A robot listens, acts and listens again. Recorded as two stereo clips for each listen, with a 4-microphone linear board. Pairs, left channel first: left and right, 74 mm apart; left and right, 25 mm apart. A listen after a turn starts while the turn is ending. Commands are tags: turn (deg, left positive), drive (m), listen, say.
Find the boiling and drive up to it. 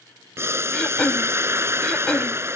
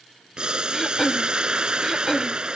<turn deg="-35"/>
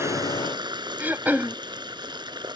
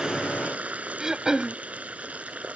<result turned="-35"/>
<turn deg="-110"/>
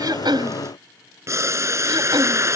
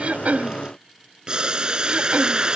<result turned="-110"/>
<turn deg="-40"/>
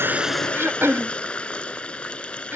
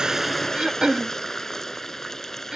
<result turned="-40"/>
<turn deg="15"/>
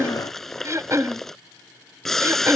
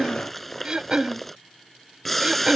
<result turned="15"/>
<drive m="1.0"/>
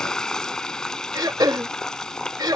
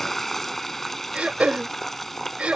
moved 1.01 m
<turn deg="10"/>
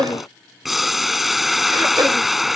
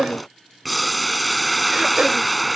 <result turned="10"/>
<drive m="1.0"/>
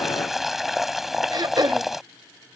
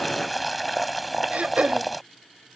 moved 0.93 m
<drive m="1.0"/>
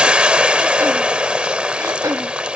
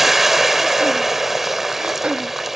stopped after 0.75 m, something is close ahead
<turn deg="-15"/>
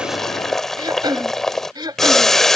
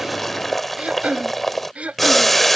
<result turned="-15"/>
<say>I am next to the boiling.</say>